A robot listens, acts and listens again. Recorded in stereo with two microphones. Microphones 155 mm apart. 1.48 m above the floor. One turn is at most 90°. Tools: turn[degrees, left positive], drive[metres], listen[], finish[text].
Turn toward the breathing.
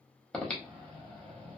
Action: turn[30]
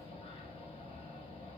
Thought: So it is at 145° left.
Action: turn[90]
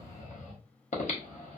Thought: The breathing is now 55° left.
Action: turn[55]
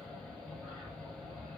Action: finish[Found it: breathing, straight ahead.]